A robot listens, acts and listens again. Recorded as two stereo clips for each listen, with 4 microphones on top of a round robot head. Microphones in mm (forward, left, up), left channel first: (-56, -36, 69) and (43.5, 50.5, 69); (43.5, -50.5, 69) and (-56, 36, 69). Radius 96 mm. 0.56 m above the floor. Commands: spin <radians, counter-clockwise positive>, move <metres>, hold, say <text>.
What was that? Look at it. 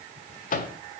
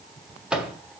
spin -2.44
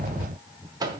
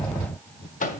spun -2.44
spin -0.35
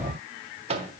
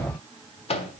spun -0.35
say Found it: a microwave, straight ahead, 1 to 2 m away.